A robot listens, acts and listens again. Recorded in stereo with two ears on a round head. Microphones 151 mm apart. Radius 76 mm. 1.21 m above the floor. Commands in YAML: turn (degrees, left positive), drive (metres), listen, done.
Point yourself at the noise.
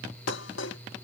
turn: 90
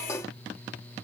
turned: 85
turn: 15
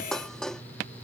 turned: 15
done: "Found it: dishes clattering, straight ahead."